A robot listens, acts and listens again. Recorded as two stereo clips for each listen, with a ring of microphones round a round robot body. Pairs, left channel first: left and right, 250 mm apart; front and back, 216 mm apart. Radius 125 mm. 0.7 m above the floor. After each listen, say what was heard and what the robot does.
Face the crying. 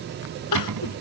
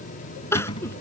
The crying: 80° left. Turn 80° left.
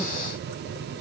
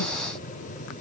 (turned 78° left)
Keep listening.
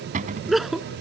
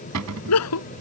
Facing the crying.